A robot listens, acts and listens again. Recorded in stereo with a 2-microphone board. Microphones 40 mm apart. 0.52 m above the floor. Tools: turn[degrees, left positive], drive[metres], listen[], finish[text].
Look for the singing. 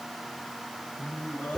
Thought: The singing: about 45° left or 135° left.
Action: turn[45]
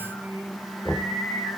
Thought: So it is at 95° left.
Action: turn[95]
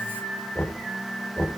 Action: finish[Facing the singing, over 4 m away.]